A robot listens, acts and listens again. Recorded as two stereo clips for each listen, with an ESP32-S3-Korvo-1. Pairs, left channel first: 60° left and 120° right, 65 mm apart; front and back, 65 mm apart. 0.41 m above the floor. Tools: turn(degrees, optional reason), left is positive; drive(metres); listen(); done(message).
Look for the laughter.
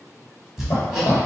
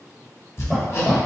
turn(degrees=85, reason="The laughter: 85° left.")
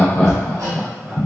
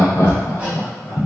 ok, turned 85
turn(degrees=-25, reason="The laughter is now 25° right.")
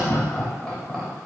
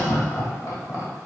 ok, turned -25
turn(degrees=-10, reason="The laughter is now 10° right.")
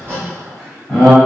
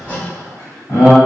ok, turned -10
turn(degrees=-30, reason="The laughter is now 30° right.")
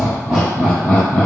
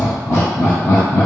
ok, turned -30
turn(degrees=-15, reason="The laughter is now 15° right.")
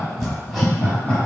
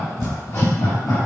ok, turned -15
done("Found it: laughter, straight ahead.")